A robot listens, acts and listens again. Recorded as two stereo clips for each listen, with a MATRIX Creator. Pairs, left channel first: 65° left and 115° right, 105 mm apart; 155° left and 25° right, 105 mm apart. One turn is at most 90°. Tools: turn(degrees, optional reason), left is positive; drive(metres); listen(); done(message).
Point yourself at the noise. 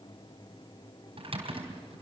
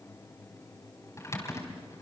turn(degrees=-90, reason="The typing on a keyboard: 140° right.")
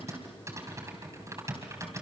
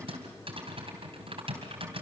turn(degrees=-50, reason="The typing on a keyboard is now 50° right.")
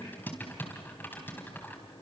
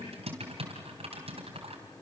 done("Facing the typing on a keyboard, 2 to 4 m away.")